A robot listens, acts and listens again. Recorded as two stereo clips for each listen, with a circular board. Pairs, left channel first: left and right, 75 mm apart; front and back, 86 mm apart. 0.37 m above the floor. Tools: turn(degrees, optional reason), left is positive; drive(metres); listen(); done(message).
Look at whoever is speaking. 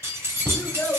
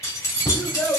turn(degrees=45, reason="The child speaking: 45° left.")
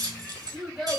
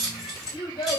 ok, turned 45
done("Facing the child speaking.")